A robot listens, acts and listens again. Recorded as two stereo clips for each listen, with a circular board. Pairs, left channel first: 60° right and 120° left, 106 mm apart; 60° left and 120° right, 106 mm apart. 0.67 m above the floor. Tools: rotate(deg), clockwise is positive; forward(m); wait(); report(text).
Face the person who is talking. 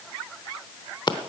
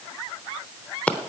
wait()
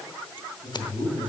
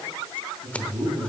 rotate(75)
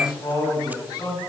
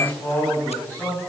rotate(10)
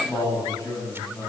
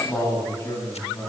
report("Found it: a man speaking, straight ahead.")